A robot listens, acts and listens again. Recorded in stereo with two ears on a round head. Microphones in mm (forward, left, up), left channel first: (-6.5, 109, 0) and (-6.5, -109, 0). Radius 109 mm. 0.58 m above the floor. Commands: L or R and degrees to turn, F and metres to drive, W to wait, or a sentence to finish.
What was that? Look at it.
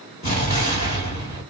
L30
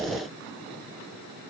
W
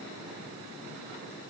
I heard an explosion, but can't make it out now. It was about straight ahead or 120° left.